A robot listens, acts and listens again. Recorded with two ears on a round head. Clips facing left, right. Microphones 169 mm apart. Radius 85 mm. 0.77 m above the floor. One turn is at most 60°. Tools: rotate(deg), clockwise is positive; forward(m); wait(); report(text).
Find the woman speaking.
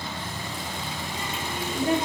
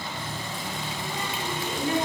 rotate(-50)
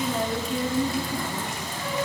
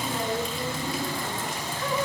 rotate(-60)
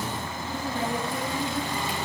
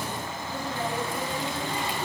rotate(-15)
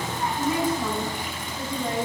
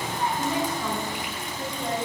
rotate(-10)
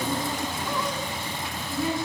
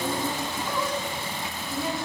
report("Facing the woman speaking.")